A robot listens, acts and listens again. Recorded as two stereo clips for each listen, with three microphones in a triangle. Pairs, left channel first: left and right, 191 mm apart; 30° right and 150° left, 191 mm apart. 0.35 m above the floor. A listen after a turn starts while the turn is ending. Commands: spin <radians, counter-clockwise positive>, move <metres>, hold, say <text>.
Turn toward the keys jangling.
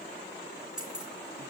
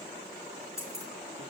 spin -3.05
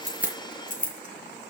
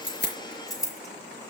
spin 0.70
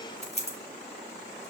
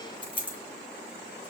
spin 0.61
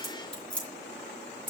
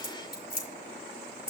spin 0.17
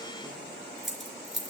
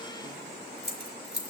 say Found it: keys jangling, straight ahead.